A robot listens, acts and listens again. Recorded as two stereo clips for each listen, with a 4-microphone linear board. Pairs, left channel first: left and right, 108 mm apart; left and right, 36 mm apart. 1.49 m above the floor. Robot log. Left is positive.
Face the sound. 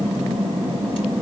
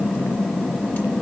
cmd idle
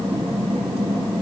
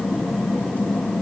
cmd idle
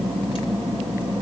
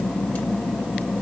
end: I can't make out anything.